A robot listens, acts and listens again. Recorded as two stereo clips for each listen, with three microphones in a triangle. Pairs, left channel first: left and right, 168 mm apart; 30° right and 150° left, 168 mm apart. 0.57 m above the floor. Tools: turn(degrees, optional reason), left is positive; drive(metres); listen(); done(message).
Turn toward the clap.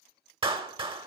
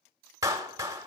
turn(degrees=-140, reason="The clap: 140° right.")
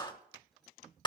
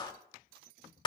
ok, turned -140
turn(degrees=30, reason="The clap is now 30° left.")
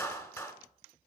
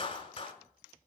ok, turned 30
turn(degrees=20, reason="The clap is now 20° left.")
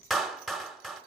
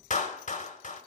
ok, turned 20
done("Facing the clap, 1 to 2 m away.")